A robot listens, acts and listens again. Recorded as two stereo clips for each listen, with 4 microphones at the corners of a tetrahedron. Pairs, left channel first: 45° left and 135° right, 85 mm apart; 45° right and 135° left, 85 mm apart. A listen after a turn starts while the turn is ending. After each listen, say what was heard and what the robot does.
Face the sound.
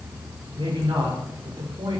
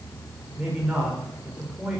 The man speaking: 145° right. Turn 145° right.
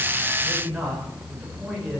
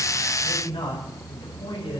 The man speaking is now 50° right. Turn 50° right.
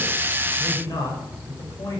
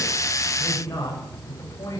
The man speaking is now 10° left. Turn 10° left.
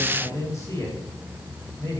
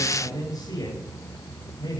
Found it: a man speaking, straight ahead, over 4 m away.